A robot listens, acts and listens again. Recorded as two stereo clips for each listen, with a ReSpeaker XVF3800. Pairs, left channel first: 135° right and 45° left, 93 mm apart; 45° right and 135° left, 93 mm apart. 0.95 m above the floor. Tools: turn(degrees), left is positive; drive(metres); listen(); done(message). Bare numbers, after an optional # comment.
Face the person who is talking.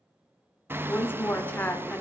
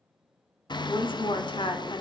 # The woman speaking: 65° right.
turn(-65)
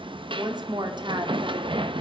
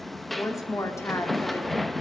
# The woman speaking is now 15° left.
turn(15)
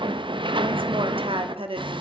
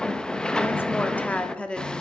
# The woman speaking is now 35° left.
turn(35)
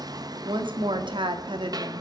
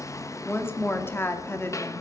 # The woman speaking is now 20° left.
turn(20)
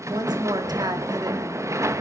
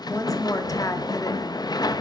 done("Found it: a woman speaking, straight ahead, 2 to 4 m away.")